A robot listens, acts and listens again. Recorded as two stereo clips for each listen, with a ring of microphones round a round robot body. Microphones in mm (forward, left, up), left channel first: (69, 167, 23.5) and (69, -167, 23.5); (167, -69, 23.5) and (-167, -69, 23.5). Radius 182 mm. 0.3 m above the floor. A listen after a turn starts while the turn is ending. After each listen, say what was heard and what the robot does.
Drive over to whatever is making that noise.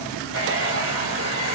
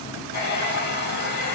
The hair dryer: 40° right. Turn 40° right.
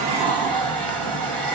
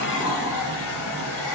Drive 1.0 m forward.
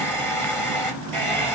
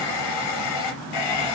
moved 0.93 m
Drive 1.0 m forward.
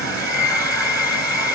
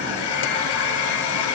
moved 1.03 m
The hair dryer is now 10° left. Turn 10° left.
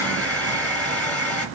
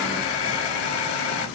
Drive 1.0 m forward.
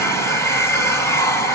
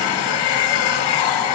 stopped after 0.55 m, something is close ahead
I am next to the hair dryer.